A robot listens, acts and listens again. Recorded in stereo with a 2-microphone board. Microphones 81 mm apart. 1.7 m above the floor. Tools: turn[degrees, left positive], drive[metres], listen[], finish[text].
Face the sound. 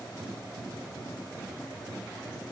Action: listen[]
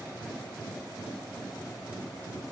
Action: listen[]
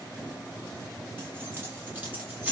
Thought: The keys jangling: about 20° right or 160° right.
Action: turn[-20]
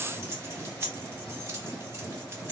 Thought: The keys jangling: about 35° right or 145° right.
Action: turn[-35]
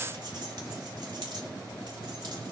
Action: listen[]
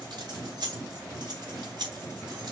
Thought: So it is at 115° right.
Action: turn[-115]
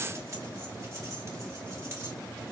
Thought: The keys jangling is now 40° right.
Action: turn[-40]
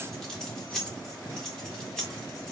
Action: finish[Found it: keys jangling, straight ahead, 2 to 4 m away.]